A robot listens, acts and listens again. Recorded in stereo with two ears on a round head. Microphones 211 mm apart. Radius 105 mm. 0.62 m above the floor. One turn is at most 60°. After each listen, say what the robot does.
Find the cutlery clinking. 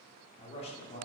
Keep listening.
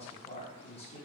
Keep listening.
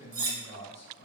Turn 55° right.
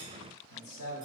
Keep listening.
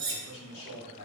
Turn 55° right.
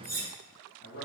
Turn 15° right.
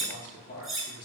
Found it: cutlery clinking, straight ahead, under 1 m away.